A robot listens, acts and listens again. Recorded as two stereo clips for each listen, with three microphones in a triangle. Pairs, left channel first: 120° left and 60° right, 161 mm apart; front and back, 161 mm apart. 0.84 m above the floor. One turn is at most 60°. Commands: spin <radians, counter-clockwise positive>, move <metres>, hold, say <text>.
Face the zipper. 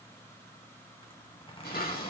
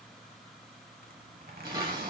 spin 1.05
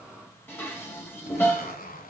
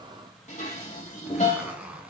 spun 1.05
spin 1.05
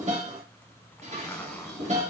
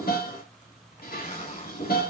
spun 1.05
spin 0.70
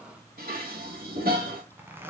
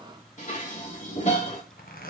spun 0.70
spin 0.26
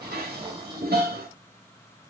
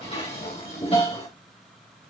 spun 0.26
hold
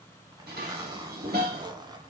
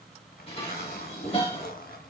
say Found it: a zipper, straight ahead, 1 to 2 m away.